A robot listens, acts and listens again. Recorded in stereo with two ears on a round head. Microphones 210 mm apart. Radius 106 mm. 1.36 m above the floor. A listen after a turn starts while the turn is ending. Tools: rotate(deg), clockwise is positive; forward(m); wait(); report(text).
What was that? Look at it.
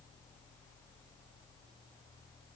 wait()
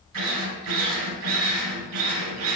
rotate(90)
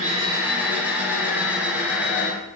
report("Facing the drill.")